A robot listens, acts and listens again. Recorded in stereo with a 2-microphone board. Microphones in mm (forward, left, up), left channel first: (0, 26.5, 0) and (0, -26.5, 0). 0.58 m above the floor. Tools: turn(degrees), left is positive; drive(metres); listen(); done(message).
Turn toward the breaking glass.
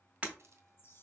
turn(degrees=-25)
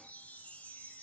listen()
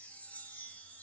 done("I heard breaking glass, but can't make it out now. It was about straight ahead or 130° right.")